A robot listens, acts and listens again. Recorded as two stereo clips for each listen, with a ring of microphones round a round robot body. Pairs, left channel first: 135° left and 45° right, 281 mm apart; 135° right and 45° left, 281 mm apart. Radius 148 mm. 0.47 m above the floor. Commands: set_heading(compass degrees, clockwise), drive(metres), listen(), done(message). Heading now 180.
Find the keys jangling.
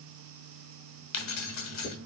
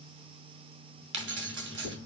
set_heading(85)
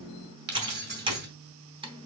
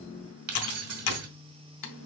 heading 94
set_heading(84)
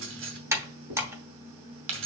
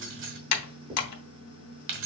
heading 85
done("Facing the keys jangling, 1 to 2 m away.")